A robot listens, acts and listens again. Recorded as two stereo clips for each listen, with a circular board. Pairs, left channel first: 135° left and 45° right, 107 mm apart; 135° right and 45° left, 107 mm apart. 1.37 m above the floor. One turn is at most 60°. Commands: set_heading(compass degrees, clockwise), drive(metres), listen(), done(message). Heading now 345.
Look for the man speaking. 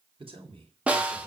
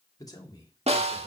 set_heading(45)
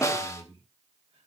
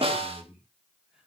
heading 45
set_heading(85)
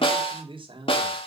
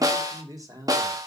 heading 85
set_heading(95)
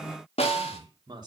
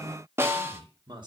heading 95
done("Facing the man speaking, 2 to 4 m away.")